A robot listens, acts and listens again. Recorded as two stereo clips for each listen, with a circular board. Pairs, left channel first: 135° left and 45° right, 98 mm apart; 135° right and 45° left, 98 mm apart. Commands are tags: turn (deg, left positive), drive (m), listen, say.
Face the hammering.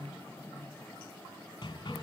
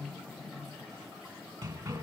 <turn deg="90"/>
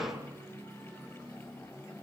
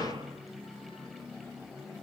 <turn deg="10"/>
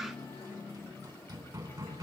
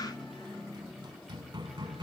<say>Facing the hammering, 2 to 4 m away.</say>